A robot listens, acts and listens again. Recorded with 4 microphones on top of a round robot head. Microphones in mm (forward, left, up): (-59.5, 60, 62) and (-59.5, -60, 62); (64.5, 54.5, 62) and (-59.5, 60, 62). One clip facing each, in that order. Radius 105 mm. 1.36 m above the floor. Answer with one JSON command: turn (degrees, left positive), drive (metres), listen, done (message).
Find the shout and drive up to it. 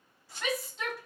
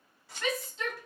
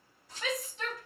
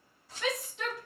{"turn": 180}
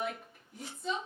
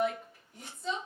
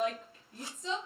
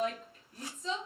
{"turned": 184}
{"drive": 1.0}
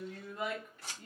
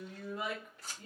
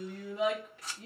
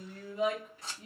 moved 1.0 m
{"drive": 1.0}
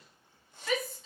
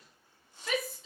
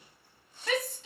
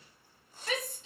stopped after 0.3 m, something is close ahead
{"done": "I am next to the shout."}